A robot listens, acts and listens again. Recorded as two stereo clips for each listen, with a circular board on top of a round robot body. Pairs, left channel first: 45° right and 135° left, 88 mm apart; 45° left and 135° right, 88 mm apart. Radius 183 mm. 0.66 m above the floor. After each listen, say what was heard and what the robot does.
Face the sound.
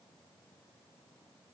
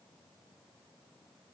Keep listening.
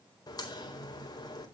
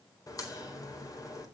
Found it: a crack, straight ahead.